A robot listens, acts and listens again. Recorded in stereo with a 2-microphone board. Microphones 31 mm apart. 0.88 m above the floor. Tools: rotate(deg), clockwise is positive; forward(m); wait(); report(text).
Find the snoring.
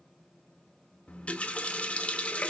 wait()
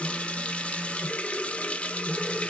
wait()
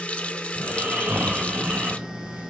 rotate(75)
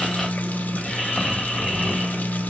report("Facing the snoring.")